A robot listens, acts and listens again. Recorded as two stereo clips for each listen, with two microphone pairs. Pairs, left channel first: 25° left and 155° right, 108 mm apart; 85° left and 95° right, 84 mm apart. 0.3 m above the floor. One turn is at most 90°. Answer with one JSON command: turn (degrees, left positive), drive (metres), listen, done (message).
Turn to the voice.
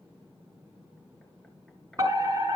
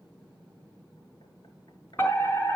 {"listen": true}
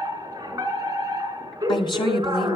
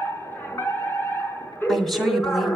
{"done": "Found it: a woman speaking, straight ahead, 1 to 2 m away."}